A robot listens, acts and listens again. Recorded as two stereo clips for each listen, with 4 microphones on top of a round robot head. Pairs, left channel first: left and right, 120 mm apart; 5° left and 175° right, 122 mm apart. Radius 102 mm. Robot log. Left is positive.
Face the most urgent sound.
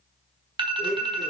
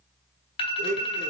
note: The alarm: 40° right.
cmd yaw -40
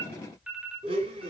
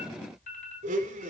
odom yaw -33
note: The alarm is now 10° right.
cmd yaw -10
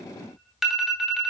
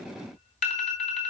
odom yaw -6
end: Found it: an alarm, straight ahead.